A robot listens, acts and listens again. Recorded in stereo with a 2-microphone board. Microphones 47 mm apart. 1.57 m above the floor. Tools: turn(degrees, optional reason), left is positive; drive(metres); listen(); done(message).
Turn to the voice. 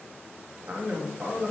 turn(degrees=-35, reason="The man speaking: about 35° right or 145° right.")
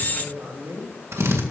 turn(degrees=-110, reason="So it is at 110° right.")
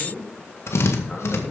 turn(degrees=30, reason="The man speaking is now 30° left.")
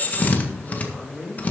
turn(degrees=-10, reason="The man speaking is now 10° right.")
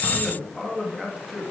done("Found it: a man speaking, straight ahead.")